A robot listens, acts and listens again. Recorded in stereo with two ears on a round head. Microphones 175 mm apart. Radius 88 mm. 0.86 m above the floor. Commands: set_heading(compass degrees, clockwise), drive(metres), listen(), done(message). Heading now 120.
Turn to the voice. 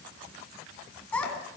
set_heading(90)
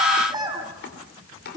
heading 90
set_heading(110)
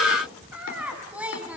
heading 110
done("Found it: a child speaking, straight ahead, over 4 m away.")